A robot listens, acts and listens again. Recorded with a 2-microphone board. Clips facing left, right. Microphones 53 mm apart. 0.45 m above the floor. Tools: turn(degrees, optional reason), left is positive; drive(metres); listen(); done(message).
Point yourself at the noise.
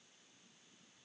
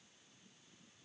listen()
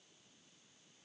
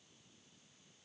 listen()
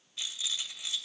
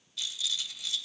turn(degrees=30, reason="The rattle: about 30° left or 150° left.")
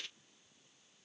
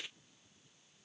turn(degrees=10, reason="So it is at 10° left.")
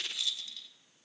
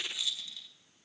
done("Found it: a rattle, straight ahead.")